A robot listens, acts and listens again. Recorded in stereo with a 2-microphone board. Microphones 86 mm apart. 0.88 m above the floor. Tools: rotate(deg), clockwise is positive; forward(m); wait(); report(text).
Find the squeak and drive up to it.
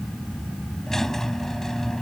rotate(-30)
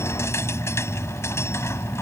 rotate(-145)
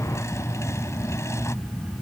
rotate(-35)
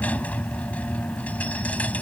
rotate(-15)
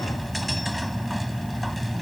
wait()
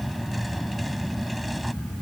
wait()
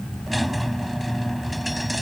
forward(1.0)
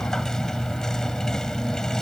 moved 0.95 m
forward(1.0)
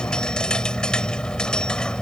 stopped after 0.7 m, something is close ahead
rotate(-10)
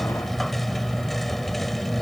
report("Blocked. The squeak is further on, straight ahead.")